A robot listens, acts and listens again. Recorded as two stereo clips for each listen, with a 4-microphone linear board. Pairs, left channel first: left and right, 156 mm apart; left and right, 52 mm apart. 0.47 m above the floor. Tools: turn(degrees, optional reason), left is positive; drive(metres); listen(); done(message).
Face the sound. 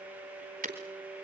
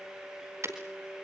turn(degrees=-55, reason="The breaking glass: about 55° right or 125° right.")
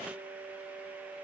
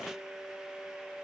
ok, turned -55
listen()
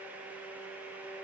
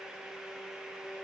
done("I heard breaking glass, but can't make it out now. It was about straight ahead or 70° right.")